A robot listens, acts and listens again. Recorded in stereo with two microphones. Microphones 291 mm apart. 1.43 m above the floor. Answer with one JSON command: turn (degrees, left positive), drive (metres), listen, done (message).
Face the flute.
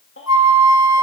{"turn": 70}
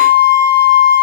{"turn": 40}
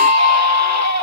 {"done": "Facing the flute, over 4 m away."}